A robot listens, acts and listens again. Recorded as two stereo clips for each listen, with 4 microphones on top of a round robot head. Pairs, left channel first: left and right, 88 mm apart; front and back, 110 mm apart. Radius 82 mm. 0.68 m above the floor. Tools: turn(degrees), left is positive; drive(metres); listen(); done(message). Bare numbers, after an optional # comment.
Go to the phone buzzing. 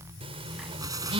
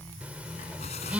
# The phone buzzing: 100° right.
turn(-100)
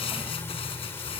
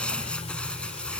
listen()
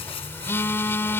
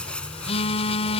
# The phone buzzing is now 25° left.
turn(25)
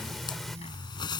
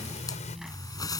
listen()
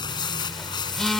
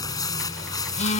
drive(1.0)
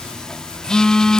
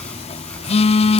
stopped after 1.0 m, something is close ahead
# The phone buzzing is now 10° left.
turn(10)
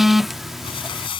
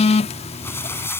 done("I am next to the phone buzzing.")